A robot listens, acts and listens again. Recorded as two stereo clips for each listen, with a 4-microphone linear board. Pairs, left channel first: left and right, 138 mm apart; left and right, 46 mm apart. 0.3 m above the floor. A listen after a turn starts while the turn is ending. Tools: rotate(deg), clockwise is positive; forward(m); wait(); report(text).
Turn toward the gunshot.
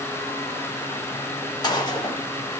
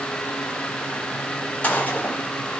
rotate(-30)
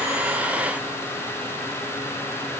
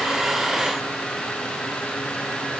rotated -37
wait()
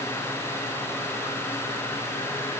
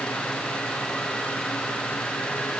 report("I heard a gunshot, but can't make it out now. It was about 5° right or 110° left.")